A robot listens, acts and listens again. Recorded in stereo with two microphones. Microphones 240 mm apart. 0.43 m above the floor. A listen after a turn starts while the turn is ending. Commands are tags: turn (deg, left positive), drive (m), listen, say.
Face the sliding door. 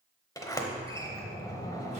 <turn deg="30"/>
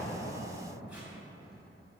<turn deg="140"/>
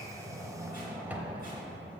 <turn deg="-10"/>
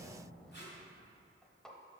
<say>Facing the sliding door, under 1 m away.</say>